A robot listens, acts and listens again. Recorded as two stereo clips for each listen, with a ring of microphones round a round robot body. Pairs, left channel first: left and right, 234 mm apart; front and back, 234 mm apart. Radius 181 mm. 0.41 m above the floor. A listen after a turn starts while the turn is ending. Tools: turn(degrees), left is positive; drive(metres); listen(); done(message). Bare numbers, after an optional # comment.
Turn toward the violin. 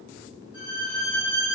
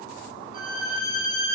# The violin: 135° left.
turn(135)
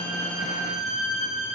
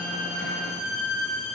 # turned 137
done("Facing the violin, 2 to 4 m away.")